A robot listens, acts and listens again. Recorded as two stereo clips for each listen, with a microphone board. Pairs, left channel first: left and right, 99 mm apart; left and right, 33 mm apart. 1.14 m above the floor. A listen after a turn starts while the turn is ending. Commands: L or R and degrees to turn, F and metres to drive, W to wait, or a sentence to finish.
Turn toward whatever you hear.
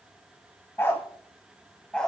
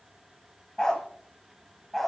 L30
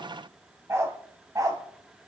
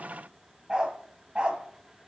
R40
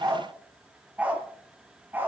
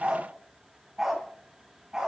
R20
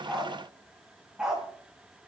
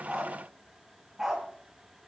Facing the dog barking, 2 to 4 m away.